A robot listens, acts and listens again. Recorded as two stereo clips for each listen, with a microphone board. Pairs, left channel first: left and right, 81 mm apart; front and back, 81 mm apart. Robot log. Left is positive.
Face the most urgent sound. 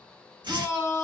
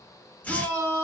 note: The shout: 155° left.
cmd yaw +155
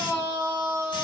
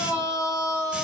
note: The shout is now 30° right.
cmd yaw -30
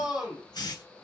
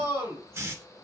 note: The shout is now 10° right.
cmd yaw -10
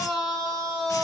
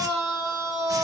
end: Found it: a shout, straight ahead, 1 to 2 m away.